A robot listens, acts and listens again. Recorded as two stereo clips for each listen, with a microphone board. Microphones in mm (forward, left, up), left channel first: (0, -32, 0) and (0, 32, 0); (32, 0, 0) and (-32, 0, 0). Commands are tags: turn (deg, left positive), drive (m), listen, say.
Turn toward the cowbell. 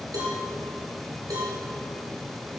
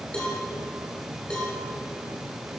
<turn deg="75"/>
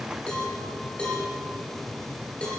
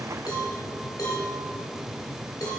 <turn deg="-15"/>
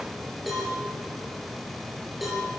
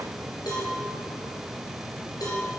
<say>Found it: a cowbell, straight ahead, over 4 m away.</say>